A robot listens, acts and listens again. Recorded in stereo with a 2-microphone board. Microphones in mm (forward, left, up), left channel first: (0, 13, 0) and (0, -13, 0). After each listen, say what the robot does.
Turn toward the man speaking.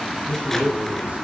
Turn 70° right.
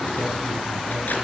Keep listening.
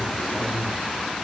Turn 25° right.
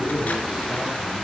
Found it: a man speaking, straight ahead, 2 to 4 m away.